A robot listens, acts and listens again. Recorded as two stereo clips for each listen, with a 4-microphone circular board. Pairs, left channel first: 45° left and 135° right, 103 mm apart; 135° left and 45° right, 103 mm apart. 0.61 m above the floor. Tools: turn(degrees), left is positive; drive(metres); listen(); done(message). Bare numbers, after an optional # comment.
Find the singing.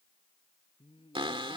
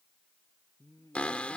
# The singing: 75° left.
turn(75)
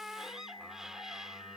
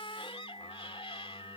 listen()
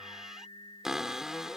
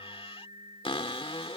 done("Facing the singing.")